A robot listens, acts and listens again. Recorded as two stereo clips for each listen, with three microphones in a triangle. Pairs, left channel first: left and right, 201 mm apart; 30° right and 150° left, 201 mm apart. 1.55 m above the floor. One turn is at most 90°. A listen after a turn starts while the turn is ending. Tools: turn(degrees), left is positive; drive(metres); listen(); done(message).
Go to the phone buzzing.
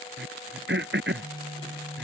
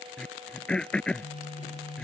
turn(degrees=-40)
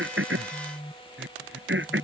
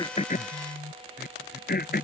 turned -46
drive(metres=1.0)
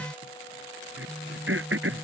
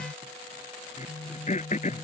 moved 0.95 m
drive(metres=1.0)
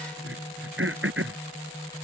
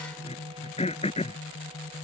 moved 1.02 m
drive(metres=1.0)
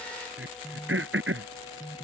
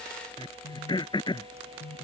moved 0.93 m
drive(metres=1.0)
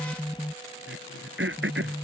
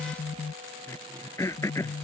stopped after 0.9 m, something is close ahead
done("I am next to the phone buzzing.")